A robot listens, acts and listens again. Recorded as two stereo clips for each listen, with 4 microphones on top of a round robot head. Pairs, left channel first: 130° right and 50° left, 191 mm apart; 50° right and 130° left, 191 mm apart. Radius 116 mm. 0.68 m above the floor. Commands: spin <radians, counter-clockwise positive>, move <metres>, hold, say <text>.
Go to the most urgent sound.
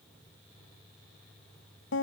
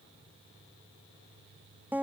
hold
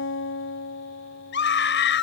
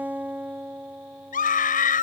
spin -1.75
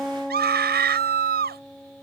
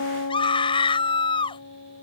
spin 0.26
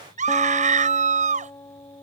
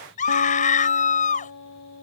move 1.0
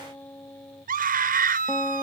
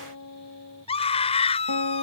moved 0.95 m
move 1.0
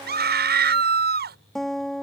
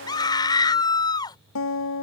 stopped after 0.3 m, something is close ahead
spin 0.26
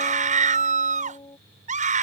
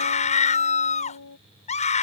say Blocked. The scream is further on, straight ahead.